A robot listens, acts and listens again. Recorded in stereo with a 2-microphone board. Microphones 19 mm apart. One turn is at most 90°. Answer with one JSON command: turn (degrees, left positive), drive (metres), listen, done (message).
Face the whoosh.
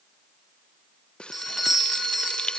{"listen": true}
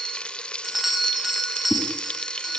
{"turn": 30}
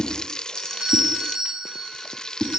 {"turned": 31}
{"turn": 90}
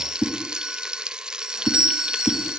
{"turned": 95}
{"turn": 50}
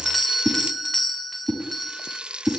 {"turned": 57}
{"done": "Facing the whoosh, over 4 m away."}